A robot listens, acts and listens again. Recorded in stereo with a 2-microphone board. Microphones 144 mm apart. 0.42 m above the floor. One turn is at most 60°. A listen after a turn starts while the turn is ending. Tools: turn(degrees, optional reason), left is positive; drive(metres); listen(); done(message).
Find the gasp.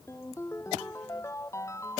listen()
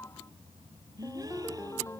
turn(degrees=-25, reason="The gasp: about 25° right or 155° right.")
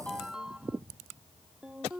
listen()
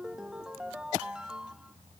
done("I heard a gasp, but can't make it out now. It was about straight ahead or 130° right.")